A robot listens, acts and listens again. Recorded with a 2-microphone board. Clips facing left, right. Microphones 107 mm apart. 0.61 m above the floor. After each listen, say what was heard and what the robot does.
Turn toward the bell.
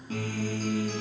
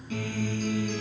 Keep listening.
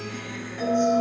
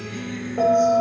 The bell: about 60° right or 120° right. Turn 60° right.
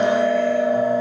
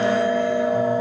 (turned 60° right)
So it is at 25° right. Turn 25° right.
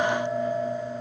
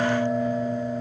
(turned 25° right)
Found it: a bell, straight ahead, 2 to 4 m away.